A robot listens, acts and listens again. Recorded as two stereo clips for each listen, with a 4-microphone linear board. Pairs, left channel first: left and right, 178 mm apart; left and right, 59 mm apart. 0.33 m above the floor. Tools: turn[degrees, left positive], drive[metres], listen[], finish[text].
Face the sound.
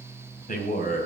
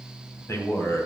Thought: The man speaking: about 55° left or 125° left.
Action: turn[55]
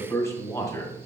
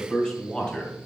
Thought: So it is at 20° left.
Action: turn[20]
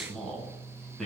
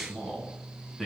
Action: finish[Facing the man speaking, 2 to 4 m away.]